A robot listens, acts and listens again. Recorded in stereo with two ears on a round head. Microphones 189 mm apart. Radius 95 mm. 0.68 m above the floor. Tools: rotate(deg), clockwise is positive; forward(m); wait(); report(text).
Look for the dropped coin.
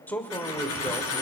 rotate(-90)
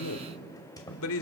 report("I heard a dropped coin from this way, but can't make it out now.")